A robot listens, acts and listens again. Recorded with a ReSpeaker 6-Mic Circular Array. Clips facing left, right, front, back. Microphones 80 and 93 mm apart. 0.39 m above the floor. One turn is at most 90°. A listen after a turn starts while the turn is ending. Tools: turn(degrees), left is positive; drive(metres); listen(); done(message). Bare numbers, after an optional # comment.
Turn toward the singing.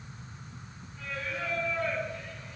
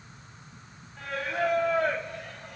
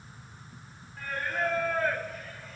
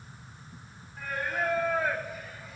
# The singing: 95° right.
turn(-90)
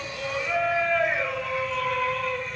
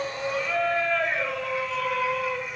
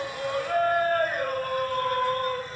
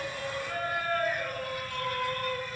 # The singing is now 15° right.
turn(-15)
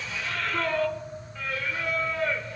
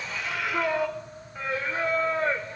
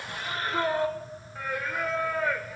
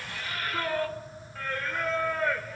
# The singing is now 80° right.
turn(-80)
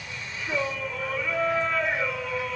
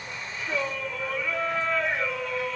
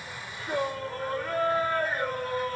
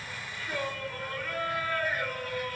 done("Found it: singing, straight ahead.")